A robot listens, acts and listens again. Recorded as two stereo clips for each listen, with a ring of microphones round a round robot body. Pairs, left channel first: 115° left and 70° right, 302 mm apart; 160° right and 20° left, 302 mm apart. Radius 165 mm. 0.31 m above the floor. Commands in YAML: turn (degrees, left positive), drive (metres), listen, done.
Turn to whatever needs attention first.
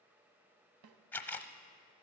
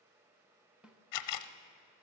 listen: true
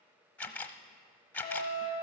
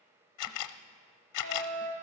turn: 35
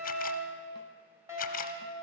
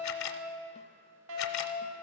turn: 15
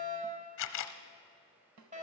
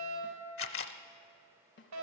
done: "Facing the fire alarm, over 4 m away."